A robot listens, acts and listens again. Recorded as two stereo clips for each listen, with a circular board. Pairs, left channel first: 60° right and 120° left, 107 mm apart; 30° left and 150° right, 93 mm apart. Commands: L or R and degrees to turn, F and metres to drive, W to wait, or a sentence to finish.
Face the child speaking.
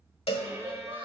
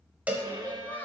L100
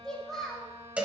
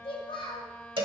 L30
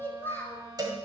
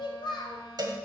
L10
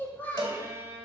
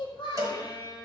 L15
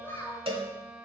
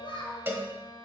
L10
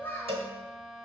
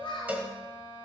L10
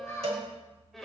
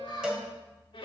Found it: a child speaking, straight ahead, 2 to 4 m away.